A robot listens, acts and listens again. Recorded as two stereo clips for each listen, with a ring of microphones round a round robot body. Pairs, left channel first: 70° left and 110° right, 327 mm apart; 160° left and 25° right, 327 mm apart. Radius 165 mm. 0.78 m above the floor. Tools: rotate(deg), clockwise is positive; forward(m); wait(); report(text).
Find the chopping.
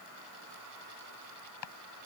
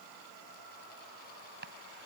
rotate(-40)
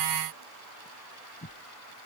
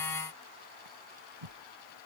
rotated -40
rotate(10)
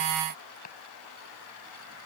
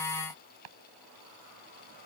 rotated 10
report("Found it: chopping, straight ahead.")